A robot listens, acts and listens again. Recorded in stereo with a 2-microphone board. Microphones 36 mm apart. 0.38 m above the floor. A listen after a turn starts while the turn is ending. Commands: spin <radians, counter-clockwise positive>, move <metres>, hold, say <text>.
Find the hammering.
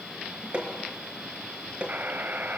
spin -0.61
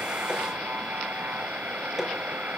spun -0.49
spin -0.17
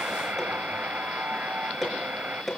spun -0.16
say Found it: hammering, straight ahead, over 4 m away.